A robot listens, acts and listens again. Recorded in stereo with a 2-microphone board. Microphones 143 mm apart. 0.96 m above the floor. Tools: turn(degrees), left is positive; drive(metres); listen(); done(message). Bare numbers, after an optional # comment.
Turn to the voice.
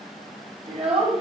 # The child speaking: about 45° right or 135° right.
turn(-45)
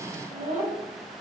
# So it is at 100° right.
turn(-100)
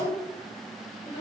# The child speaking is now 30° left.
turn(30)
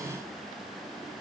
listen()
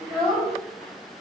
done("Facing the child speaking, over 4 m away.")